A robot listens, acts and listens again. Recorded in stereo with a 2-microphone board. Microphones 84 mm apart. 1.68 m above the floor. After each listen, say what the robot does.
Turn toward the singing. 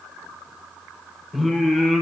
Turn 30° left.
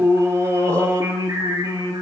Turn 40° right.
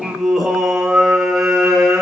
Turn 15° right.
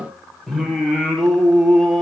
Facing the singing.